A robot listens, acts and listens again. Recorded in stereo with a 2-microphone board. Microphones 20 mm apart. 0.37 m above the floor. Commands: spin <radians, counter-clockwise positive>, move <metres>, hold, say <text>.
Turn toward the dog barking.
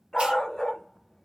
spin 0.70
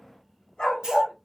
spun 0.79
spin 2.18
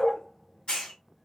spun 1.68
spin 0.70
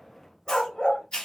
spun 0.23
spin 0.96
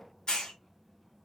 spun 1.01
hold
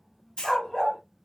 spin 0.17
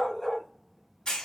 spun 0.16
say Facing the dog barking, 1 to 2 m away.